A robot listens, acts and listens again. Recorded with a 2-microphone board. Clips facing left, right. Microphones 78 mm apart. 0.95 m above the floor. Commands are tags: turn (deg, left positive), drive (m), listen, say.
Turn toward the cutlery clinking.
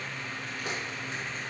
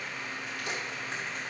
<listen/>
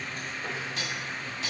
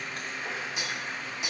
<turn deg="-15"/>
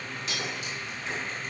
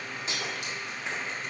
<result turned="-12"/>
<turn deg="-150"/>
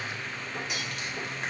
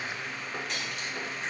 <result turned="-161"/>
<say>Found it: cutlery clinking, straight ahead.</say>